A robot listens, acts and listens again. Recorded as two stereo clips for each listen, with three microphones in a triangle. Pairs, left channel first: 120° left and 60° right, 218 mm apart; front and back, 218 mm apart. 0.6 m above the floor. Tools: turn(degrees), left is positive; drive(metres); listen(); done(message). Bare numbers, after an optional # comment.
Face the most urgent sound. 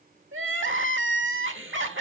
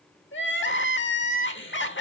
# The crying: 35° right.
turn(-35)
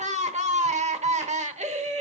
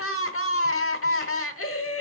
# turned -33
done("Facing the crying, 1 to 2 m away.")